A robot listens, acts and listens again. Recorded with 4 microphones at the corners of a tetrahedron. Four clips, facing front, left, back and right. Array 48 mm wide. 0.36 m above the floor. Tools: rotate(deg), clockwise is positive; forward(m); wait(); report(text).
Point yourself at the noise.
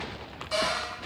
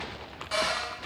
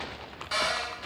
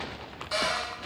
rotate(-150)
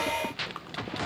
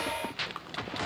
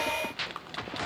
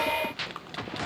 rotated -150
wait()
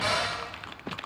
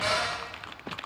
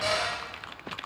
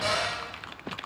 rotate(-25)
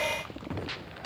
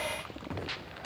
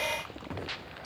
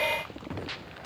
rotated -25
rotate(-10)
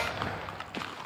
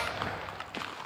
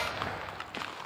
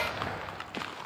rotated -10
wait()
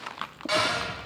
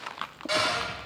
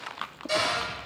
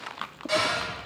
report("Found it: a cupboard door, straight ahead, 1 to 2 m away.")